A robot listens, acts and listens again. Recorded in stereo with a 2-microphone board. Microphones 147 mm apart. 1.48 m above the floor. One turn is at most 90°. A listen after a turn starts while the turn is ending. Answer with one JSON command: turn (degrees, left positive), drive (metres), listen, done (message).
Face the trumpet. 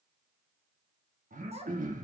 {"listen": true}
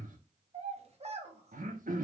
{"listen": true}
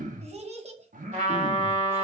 {"turn": -55}
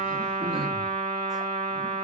{"turn": -75}
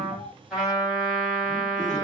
{"done": "Facing the trumpet, 1 to 2 m away."}